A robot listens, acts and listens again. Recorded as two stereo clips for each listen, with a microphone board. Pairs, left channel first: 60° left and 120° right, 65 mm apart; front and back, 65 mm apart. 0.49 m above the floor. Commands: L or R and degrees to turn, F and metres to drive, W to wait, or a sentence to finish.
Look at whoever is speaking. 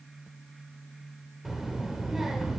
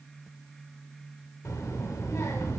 R35
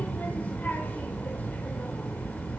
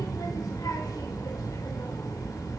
Facing the child speaking, under 1 m away.